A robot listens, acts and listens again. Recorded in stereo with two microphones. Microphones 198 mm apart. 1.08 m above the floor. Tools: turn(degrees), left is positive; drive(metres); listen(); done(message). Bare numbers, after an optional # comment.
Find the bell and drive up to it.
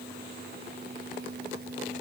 listen()
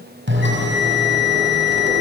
turn(-90)
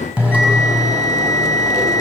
drive(1.0)
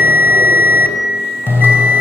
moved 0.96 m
# The bell is now 10° right.
turn(-10)
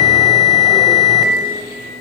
drive(1.0)
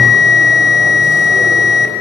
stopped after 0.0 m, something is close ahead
done("Something is in my way. I am facing the bell but have not reached it.")